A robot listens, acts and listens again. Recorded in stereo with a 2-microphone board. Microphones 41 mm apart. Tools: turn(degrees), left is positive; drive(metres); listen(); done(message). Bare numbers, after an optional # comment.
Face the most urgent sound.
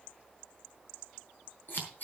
listen()
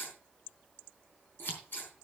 listen()
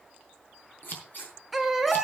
turn(30)
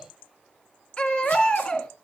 # So it is at 150° left.
turn(150)
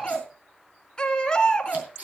# The baby crying is now 20° left.
turn(20)
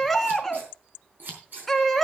done("Facing the baby crying, 2 to 4 m away.")